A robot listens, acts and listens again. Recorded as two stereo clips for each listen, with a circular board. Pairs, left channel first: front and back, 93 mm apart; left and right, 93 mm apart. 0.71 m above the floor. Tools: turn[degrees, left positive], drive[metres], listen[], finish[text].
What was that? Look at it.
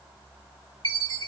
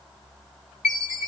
Thought: The chime: 175° left.
Action: turn[175]
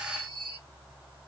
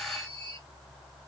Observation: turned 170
Action: finish[Facing the chime, 2 to 4 m away.]